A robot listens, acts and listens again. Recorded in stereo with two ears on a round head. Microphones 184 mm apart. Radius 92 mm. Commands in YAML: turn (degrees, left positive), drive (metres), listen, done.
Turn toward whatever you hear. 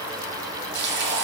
turn: -55
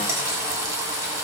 turn: -20
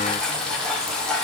done: "Found it: frying, straight ahead, 1 to 2 m away."